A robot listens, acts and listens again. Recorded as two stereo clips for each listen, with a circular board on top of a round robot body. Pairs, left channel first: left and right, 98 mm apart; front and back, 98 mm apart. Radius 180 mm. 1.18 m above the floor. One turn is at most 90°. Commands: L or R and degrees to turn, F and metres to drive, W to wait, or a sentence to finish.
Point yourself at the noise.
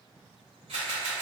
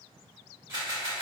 R90
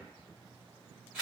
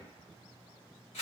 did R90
R10
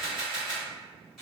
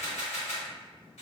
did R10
Found it: a camera shutter, straight ahead, 1 to 2 m away.